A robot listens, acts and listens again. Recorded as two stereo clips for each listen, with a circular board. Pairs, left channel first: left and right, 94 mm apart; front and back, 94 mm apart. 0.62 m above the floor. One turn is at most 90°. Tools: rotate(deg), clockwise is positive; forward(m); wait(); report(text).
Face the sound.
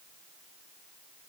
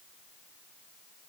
wait()
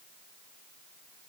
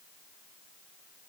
wait()
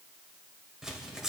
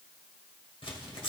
report("Found it: tearing paper, straight ahead, 2 to 4 m away.")